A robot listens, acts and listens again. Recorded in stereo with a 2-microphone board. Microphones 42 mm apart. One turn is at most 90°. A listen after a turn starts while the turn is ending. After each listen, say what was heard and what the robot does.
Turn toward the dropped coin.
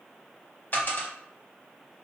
The dropped coin: about 50° left or 130° left. Turn 50° left.
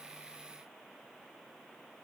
Keep listening.
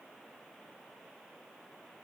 I heard a dropped coin, but can't make it out now. It was about straight ahead or 80° left.